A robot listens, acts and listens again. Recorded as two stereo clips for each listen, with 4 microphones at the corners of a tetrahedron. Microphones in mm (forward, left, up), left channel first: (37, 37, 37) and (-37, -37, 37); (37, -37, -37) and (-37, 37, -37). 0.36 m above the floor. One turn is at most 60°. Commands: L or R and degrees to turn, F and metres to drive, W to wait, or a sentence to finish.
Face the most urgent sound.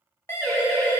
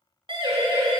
L60
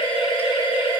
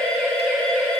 L35
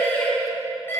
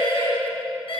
R25
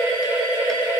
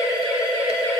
Facing the siren, over 4 m away.